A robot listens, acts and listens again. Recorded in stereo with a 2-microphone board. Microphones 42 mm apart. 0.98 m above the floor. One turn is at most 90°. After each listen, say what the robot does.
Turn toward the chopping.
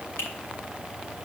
Keep listening.
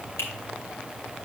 Keep listening.
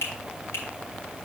I can't make out chopping, only a finger snap.